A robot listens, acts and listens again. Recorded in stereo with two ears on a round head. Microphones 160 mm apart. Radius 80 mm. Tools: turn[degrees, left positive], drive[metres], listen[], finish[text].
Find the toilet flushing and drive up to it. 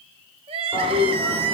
Action: turn[30]
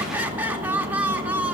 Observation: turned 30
Action: listen[]
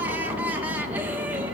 Thought: So it is at 25° right.
Action: turn[-25]
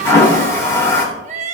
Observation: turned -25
Thought: The toilet flushing is now 15° left.
Action: turn[15]
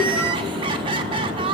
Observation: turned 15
Action: drive[1.0]
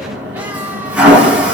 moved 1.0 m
Thought: The toilet flushing is now 10° right.
Action: turn[-10]
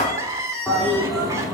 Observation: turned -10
Action: drive[1.0]
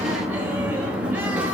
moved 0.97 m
Thought: The toilet flushing is now 10° right.
Action: turn[-10]
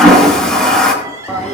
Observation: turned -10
Action: drive[1.0]
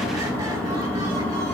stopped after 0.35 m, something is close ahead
Action: finish[Arrived at the toilet flushing, straight ahead.]